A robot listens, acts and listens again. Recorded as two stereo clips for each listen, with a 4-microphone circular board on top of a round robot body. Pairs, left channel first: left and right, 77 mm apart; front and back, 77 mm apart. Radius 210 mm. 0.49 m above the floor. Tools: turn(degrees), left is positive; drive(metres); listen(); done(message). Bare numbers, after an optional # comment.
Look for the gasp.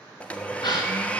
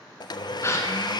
# The gasp: 55° left.
turn(55)
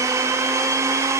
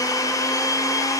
done("Facing where the gasp came from. I can't hear it now.")